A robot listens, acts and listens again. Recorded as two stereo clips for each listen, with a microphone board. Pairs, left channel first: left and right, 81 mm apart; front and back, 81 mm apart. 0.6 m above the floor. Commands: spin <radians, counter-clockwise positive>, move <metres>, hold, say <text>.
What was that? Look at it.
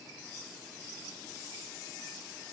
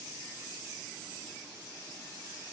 hold
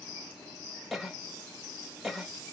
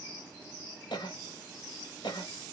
say Facing the cough, 1 to 2 m away.